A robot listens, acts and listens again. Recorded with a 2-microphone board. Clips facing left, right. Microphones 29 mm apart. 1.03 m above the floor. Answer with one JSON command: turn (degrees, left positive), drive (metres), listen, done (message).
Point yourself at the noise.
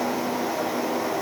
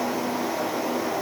{"listen": true}
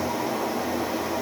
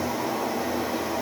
{"listen": true}
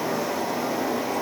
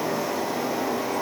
{"done": "I can't make out anything."}